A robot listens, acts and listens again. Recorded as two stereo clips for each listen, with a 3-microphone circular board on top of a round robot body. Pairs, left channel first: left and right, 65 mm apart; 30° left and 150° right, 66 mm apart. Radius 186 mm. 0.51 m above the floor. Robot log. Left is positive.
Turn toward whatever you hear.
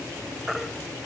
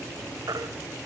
note: The baby crying: 175° right.
cmd yaw -175
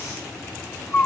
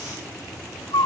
note: The baby crying is now 20° left.
cmd yaw +20
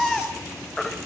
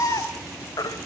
end: Facing the baby crying.